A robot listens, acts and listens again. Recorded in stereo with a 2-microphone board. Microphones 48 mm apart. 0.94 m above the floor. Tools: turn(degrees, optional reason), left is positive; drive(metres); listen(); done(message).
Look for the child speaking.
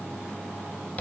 listen()
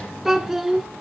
turn(degrees=30)
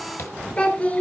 turn(degrees=145, reason="So it is at 145° left.")
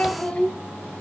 turn(degrees=25, reason="The child speaking is now 25° left.")
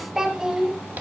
turn(degrees=-15, reason="The child speaking is now 15° right.")
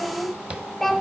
done("Facing the child speaking, over 4 m away.")